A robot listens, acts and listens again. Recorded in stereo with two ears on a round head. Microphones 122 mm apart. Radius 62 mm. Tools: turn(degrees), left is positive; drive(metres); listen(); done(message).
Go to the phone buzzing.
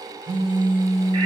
turn(degrees=-40)
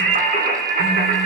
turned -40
listen()
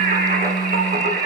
drive(metres=1.0)
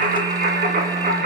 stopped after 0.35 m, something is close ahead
listen()
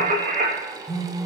done("Something is in my way. I am facing the phone buzzing but have not reached it.")